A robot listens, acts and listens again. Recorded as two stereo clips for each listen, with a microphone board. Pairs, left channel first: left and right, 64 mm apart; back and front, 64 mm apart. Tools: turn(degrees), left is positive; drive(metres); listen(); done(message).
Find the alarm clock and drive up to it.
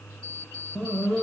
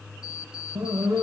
turn(degrees=165)
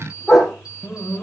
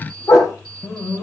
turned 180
turn(degrees=-15)
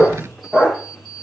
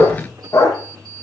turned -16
drive(metres=1.0)
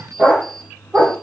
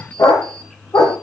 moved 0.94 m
drive(metres=1.0)
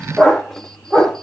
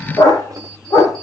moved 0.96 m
drive(metres=1.0)
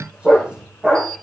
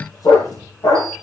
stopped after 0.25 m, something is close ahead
listen()
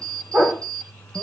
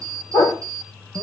turn(degrees=10)
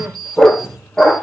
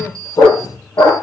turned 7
done("I am next to the alarm clock.")